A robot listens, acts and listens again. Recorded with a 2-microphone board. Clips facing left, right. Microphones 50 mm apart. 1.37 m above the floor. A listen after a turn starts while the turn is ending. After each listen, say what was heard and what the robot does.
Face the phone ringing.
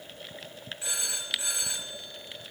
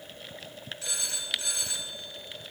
The phone ringing: about 20° left or 160° left. Turn 20° left.
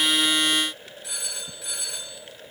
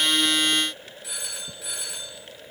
Facing the phone ringing.